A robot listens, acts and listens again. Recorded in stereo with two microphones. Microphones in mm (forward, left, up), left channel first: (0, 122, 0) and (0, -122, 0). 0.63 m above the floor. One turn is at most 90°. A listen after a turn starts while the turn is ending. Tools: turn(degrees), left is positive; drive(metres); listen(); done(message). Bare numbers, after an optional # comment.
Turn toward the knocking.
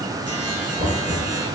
# The knocking: about 35° right or 145° right.
turn(-35)
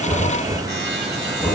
done("Facing the knocking, over 4 m away.")